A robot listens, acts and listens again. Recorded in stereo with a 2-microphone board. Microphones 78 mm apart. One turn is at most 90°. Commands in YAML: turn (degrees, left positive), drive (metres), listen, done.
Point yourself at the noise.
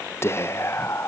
turn: 30
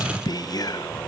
turn: 90
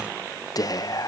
turn: 60
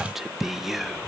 done: "Facing the whispering, under 1 m away."